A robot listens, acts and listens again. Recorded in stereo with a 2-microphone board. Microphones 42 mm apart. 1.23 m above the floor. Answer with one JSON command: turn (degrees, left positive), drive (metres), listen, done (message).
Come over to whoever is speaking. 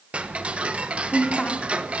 {"turn": 25}
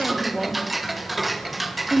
{"drive": 1.0}
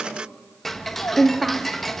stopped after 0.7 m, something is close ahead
{"turn": -10}
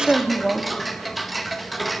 {"done": "Something is in my way. I am facing the woman speaking but have not reached it."}